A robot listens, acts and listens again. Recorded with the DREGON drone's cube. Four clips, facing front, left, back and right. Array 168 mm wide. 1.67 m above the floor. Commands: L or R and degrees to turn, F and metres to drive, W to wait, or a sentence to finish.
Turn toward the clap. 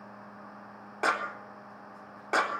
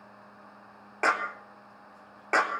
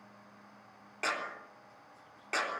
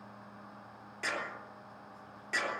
L60
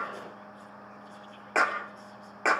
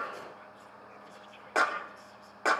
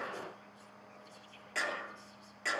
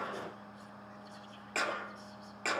L30
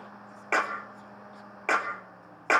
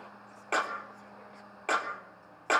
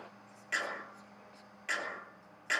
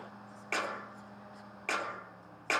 L20
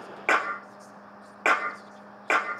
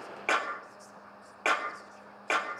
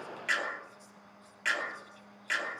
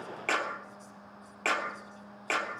Facing the clap, 2 to 4 m away.